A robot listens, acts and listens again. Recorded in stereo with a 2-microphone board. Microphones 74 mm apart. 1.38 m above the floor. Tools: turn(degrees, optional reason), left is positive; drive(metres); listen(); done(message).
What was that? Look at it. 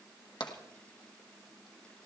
turn(degrees=75, reason="The tapping: about 75° left or 105° left.")
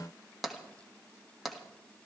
done("Facing the tapping.")